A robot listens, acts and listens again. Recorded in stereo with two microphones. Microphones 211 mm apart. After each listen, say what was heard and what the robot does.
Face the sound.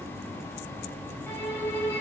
Turn 30° left.
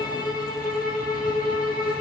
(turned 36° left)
So it is at 135° left. Turn 135° left.
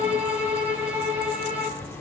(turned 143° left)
The violin is now 10° right. Turn 10° right.
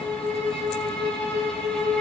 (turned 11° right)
Found it: a violin, straight ahead.